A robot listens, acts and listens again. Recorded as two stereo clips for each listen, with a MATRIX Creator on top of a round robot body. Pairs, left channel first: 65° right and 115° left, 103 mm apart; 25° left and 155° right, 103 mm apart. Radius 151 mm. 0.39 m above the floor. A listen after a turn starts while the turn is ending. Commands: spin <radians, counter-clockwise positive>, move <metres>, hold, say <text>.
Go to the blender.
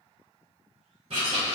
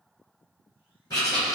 hold
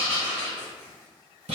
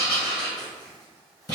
hold
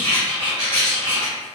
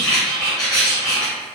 say I can't make out a blender to turn to.